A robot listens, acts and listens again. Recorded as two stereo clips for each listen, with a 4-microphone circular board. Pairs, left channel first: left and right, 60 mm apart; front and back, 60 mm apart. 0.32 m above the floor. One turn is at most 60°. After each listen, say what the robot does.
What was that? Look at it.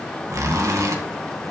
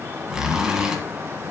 Turn 60° right.
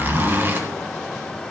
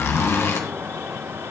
Turn 40° right.
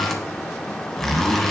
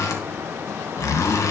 Found it: a zipper, straight ahead.